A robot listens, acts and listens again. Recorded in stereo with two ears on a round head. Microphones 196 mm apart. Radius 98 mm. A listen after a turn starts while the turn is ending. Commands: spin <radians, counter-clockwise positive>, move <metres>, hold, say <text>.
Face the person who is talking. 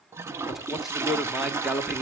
spin 0.52
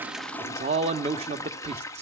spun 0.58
spin -0.61
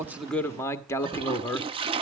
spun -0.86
spin 0.26
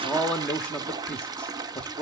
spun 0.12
say Found it: a man speaking, straight ahead, 1 to 2 m away.